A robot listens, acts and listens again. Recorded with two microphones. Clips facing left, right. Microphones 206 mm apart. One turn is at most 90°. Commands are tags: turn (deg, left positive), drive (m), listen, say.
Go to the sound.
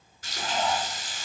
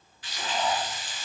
<turn deg="45"/>
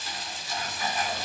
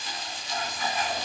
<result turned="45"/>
<drive m="1.0"/>
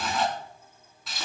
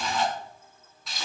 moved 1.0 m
<drive m="1.0"/>
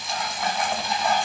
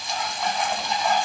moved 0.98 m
<drive m="1.0"/>
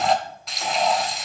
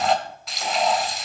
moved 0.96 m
<drive m="1.0"/>
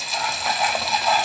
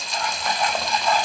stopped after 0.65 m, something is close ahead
<say>I am next to the frying.</say>